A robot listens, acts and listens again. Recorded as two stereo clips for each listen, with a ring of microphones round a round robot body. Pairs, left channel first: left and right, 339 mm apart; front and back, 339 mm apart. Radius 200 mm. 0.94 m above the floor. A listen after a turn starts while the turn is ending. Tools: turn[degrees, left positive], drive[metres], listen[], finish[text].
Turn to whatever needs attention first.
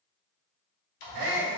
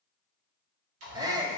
Thought: The shout: 100° right.
Action: turn[-100]
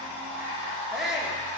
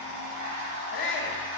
Action: finish[Facing the shout, under 1 m away.]